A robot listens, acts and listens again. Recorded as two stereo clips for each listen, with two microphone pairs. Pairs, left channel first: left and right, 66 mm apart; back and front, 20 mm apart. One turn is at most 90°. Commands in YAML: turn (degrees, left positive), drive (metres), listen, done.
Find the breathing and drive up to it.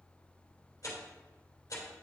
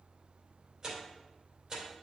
listen: true
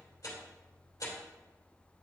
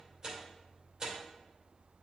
listen: true
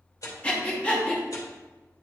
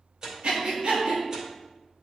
turn: 20
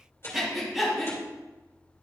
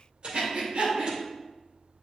drive: 1.0
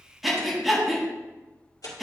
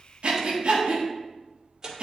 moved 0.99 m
drive: 1.0
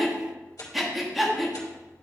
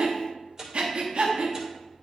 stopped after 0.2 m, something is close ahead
done: "I am next to the breathing."